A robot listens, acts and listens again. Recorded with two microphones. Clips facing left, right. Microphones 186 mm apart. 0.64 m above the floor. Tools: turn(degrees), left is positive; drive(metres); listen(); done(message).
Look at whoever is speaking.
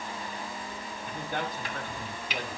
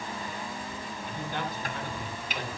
turn(degrees=50)
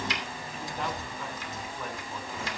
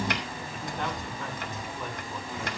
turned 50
done("Facing the man speaking, over 4 m away.")